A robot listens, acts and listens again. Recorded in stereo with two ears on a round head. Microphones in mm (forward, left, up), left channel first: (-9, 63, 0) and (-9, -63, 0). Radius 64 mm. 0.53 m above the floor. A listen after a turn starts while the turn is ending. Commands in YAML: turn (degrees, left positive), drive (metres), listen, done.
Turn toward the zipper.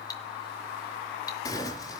turn: 25
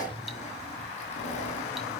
turn: 130
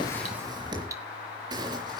turn: -30
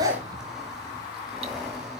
listen: true
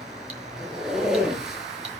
done: "Facing the zipper, 2 to 4 m away."